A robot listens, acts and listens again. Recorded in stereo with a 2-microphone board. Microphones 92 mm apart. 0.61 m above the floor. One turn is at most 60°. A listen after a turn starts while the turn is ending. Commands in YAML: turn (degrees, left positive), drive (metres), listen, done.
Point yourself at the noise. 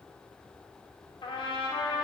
turn: 55
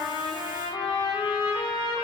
turn: 60
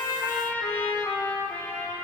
turn: 20
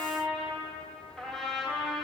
done: "Facing the trumpet."